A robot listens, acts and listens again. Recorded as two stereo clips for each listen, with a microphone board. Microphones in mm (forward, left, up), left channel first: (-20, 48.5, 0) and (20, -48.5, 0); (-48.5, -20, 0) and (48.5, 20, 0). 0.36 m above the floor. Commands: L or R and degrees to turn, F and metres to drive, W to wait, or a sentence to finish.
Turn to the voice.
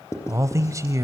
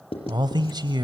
R15
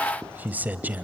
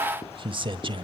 Found it: a man speaking, straight ahead.